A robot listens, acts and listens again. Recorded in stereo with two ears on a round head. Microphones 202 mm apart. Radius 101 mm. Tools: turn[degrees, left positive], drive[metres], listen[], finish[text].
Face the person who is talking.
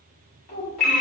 Thought: The child speaking: about 75° left or 105° left.
Action: turn[75]
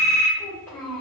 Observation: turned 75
Thought: So it is at 10° left.
Action: turn[10]
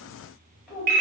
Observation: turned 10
Action: finish[Facing the child speaking.]